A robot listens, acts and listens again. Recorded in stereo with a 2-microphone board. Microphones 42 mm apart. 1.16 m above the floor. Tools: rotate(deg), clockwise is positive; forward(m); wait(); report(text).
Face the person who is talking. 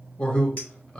rotate(-25)
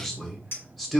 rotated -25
report("Found it: a man speaking, straight ahead.")